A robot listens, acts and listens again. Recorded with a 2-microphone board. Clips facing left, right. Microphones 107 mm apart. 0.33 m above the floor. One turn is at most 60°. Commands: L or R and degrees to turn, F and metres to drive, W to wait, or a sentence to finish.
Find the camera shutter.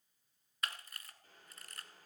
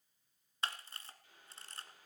R30
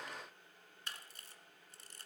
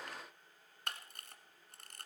R60
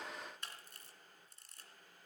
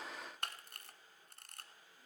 R60
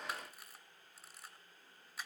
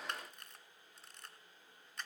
Found it: a camera shutter, straight ahead, 1 to 2 m away.